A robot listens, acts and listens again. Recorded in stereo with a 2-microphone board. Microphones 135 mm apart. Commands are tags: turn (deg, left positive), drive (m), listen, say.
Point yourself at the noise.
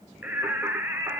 <turn deg="-15"/>
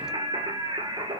<turn deg="-35"/>
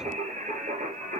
<turn deg="-110"/>
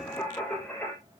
<say>Facing the singing, over 4 m away.</say>